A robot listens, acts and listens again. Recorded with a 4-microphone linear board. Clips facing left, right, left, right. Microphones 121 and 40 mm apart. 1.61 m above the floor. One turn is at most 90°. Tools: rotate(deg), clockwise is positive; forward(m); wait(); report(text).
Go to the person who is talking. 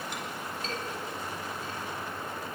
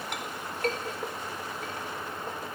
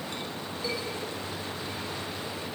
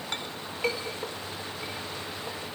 wait()
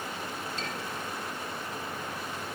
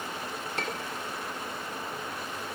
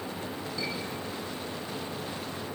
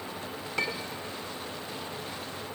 wait()
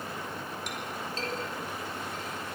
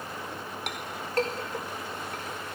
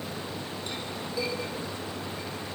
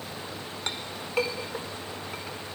report("I can't make out anyone speaking, only a clink.")